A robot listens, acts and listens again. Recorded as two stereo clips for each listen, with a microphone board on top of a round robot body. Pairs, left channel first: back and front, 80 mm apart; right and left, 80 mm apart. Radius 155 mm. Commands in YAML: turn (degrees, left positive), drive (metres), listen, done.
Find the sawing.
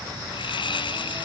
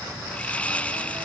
turn: -165
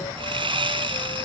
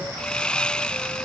turn: -10
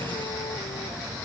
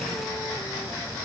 listen: true
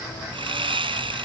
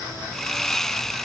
done: "Facing the sawing."